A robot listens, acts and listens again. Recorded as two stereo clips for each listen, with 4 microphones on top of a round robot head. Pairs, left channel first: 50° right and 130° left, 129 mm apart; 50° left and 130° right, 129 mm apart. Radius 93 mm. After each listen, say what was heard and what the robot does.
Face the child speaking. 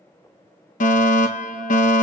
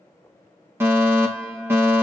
Keep listening.
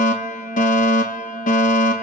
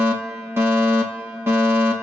Keep listening.
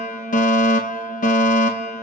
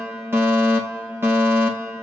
I can't make out a child speaking, only a fire alarm.